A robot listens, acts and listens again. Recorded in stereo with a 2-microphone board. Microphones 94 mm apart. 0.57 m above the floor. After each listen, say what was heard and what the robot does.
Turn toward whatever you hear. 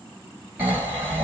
The snoring: about 20° right or 160° right. Turn 20° right.
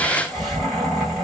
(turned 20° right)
Facing the snoring.